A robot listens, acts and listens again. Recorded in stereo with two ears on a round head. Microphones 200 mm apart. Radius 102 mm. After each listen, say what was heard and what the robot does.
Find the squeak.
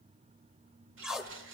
Keep listening.
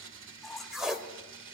Turn 30° left.
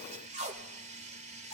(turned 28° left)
Keep listening.
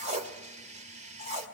Keep listening.
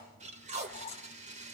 So it is at 150° left. Turn 150° left.
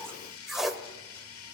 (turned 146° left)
Keep listening.
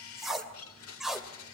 Keep listening.
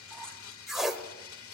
Found it: a squeak, straight ahead.